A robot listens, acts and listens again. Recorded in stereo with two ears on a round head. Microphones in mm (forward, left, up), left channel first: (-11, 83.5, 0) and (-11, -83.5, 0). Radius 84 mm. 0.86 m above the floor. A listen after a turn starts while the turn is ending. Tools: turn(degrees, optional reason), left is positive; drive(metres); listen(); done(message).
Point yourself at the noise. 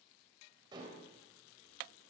turn(degrees=-25, reason="The dishes clattering: about 25° right or 155° right.")
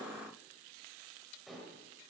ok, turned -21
done("Facing the dishes clattering, 2 to 4 m away.")